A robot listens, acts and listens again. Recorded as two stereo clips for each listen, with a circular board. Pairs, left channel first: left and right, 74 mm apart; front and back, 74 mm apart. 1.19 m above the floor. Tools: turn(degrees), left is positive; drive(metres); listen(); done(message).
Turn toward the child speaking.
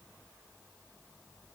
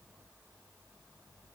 listen()
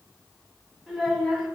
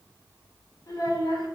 done("Found it: a child speaking, straight ahead.")